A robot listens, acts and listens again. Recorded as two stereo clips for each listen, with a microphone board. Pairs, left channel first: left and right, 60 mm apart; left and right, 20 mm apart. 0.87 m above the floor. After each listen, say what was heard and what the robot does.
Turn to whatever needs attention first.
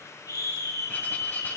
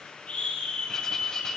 The scream: about 70° left or 110° left. Turn 70° left.
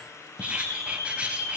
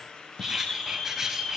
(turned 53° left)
So it is at 50° left. Turn 50° left.
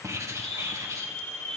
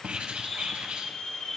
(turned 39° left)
The scream is now 15° left. Turn 15° left.
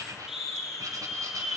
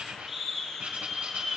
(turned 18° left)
Found it: a scream, straight ahead, over 4 m away.